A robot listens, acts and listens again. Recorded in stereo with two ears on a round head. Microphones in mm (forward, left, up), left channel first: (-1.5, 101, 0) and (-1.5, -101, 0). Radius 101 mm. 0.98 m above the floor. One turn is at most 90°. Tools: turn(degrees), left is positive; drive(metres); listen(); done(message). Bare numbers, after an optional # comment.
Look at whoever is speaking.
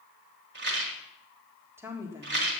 turn(-30)
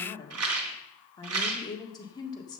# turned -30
# So it is at 20° left.
turn(20)
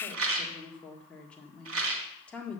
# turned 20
done("Facing the woman speaking.")